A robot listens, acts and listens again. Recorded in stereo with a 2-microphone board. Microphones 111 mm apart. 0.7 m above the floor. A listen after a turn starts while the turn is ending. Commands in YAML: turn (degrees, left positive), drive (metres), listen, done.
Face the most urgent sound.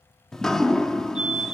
turn: -70
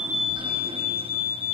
done: "Facing the fire alarm."